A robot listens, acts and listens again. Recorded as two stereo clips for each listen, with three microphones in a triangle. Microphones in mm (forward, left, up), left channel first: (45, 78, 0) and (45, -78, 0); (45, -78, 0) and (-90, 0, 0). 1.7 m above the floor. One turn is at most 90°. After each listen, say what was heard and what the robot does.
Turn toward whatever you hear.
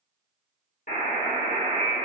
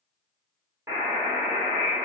The buzzer: 80° left. Turn 80° left.
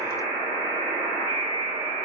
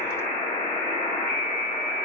The buzzer is now 25° right. Turn 25° right.
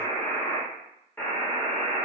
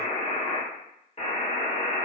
The buzzer is now 10° left. Turn 10° left.
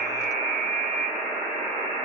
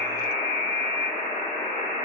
Facing the buzzer.